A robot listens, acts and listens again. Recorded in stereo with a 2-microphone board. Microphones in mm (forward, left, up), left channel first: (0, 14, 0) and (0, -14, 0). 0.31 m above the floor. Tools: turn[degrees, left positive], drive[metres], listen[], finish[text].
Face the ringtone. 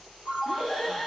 Thought: The ringtone: about 45° right or 135° right.
Action: turn[-45]
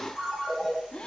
Action: finish[Facing the ringtone, over 4 m away.]